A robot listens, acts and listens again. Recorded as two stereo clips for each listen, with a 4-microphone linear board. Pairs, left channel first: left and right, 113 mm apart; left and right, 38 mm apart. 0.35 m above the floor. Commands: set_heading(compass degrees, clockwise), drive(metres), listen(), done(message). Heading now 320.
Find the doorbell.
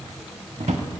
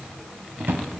listen()
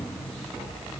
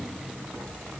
listen()
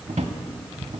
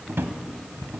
done("I can't make out a doorbell to turn to.")